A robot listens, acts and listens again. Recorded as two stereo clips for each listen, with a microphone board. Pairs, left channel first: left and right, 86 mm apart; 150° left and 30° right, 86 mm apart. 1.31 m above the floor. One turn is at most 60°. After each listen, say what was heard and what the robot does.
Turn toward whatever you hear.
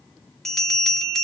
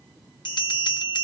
The bell: 175° left. Turn 60° left.
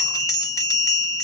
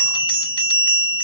The bell is now 135° left. Turn 60° left.
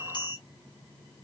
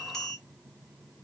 The bell is now 65° left. Turn 60° left.
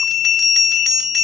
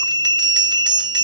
Found it: a bell, straight ahead, 1 to 2 m away.